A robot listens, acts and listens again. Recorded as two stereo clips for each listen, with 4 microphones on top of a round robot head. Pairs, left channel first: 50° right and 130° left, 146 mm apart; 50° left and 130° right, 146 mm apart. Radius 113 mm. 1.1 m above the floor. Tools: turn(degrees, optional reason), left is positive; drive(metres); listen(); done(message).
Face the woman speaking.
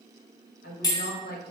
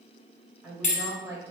turn(degrees=-55, reason="The woman speaking: 55° right.")
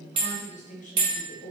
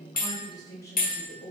turn(degrees=-25, reason="The woman speaking is now 25° right.")
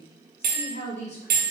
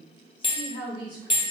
turn(degrees=-15, reason="The woman speaking is now 15° right.")
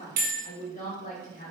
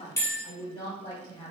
turn(degrees=-15, reason="The woman speaking is now 15° right.")
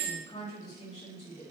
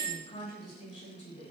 done("Facing the woman speaking.")